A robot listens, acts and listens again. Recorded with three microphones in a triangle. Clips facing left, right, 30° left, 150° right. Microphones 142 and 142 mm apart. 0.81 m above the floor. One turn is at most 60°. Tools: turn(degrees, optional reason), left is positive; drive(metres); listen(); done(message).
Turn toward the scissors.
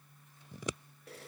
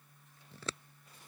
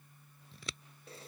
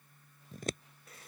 turn(degrees=60, reason="The scissors: 165° left.")
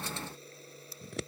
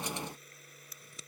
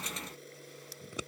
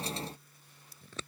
turn(degrees=60, reason="The scissors is now 110° left.")
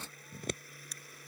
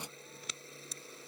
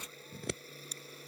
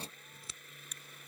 turn(degrees=50, reason="The scissors is now 50° left.")
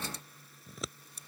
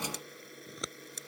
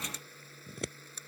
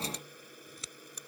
done("Found it: scissors, straight ahead.")